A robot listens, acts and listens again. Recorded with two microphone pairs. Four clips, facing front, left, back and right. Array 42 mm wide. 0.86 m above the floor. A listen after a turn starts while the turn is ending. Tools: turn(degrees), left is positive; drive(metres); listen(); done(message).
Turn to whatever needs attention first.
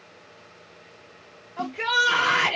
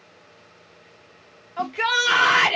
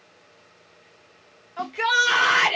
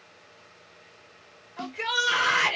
turn(degrees=120)
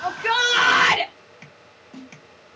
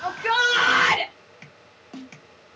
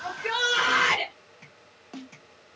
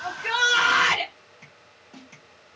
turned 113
turn(degrees=10)
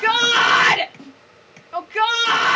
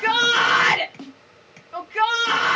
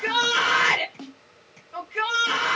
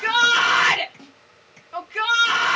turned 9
done("Facing the shout.")